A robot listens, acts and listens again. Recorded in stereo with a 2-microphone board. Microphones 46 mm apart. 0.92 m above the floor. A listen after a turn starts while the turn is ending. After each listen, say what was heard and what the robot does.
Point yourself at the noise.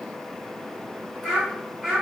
Turn 30° left.
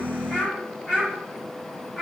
So it is at 160° left. Turn 160° left.
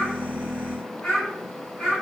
The child speaking is now 10° left. Turn 10° left.
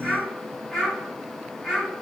Facing the child speaking.